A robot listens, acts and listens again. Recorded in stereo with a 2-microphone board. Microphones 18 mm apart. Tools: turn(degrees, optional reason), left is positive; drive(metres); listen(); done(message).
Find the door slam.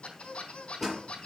turn(degrees=-20, reason="The door slam: about 20° right or 160° right.")
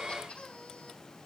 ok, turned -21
listen()
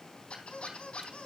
done("I heard a door slam, but can't make it out now. It was about straight ahead or 135° right.")